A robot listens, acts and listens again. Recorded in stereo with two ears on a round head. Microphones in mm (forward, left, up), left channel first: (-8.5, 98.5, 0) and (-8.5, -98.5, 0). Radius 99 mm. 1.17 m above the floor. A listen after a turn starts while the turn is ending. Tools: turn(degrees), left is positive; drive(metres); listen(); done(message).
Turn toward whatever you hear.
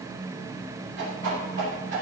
turn(degrees=-55)
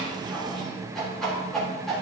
done("Found it: a whoosh, straight ahead.")